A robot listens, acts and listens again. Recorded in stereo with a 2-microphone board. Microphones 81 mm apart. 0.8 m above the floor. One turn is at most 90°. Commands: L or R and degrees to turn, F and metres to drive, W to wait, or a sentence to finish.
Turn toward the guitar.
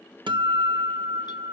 R75
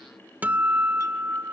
R20
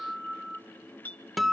Facing the guitar.